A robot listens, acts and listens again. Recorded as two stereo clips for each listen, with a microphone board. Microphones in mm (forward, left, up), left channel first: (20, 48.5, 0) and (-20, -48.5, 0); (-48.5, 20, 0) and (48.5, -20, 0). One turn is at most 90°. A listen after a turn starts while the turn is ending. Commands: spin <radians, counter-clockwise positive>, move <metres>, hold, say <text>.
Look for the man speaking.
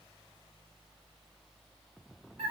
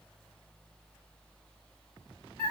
hold
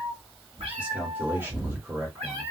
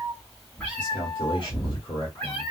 spin -1.57
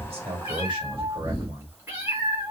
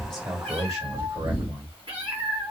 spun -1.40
spin -0.96
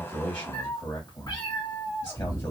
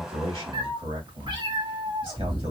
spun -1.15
spin 0.26
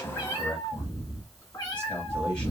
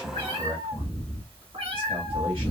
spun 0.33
say Facing the man speaking.